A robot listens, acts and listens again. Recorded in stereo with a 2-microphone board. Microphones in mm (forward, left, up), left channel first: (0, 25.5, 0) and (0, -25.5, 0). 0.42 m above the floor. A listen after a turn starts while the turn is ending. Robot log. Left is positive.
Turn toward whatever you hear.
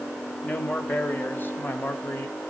note: The man speaking: about 45° left or 135° left.
cmd yaw +45
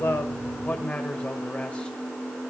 note: So it is at 25° left.
cmd yaw +25
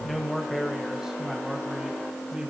note: The man speaking is now 15° right.
cmd yaw -15
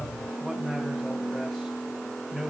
end: Facing the man speaking.